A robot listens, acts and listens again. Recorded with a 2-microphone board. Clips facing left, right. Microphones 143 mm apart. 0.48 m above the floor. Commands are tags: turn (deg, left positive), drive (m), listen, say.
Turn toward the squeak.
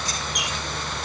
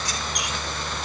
<turn deg="30"/>
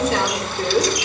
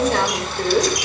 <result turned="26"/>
<listen/>
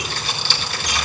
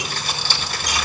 <listen/>
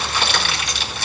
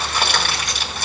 <say>I heard a squeak, but can't make it out now. It was about 25° right or 155° left.</say>